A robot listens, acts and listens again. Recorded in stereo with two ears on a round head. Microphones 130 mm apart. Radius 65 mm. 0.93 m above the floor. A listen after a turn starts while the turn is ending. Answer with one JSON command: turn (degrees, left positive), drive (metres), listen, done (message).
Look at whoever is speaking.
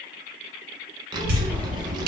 {"turn": -30}
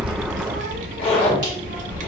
{"turn": -120}
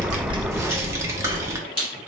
{"turn": -20}
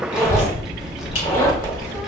{"done": "Facing the child speaking, under 1 m away."}